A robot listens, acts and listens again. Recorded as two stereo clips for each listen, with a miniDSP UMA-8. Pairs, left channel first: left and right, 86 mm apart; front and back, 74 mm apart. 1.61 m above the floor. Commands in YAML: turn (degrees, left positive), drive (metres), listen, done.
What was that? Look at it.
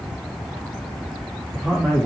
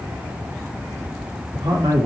turn: 175
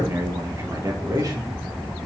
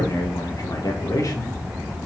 turn: -45
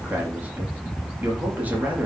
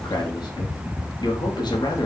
turn: -20
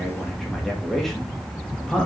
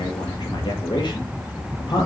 done: "Facing the man speaking, 2 to 4 m away."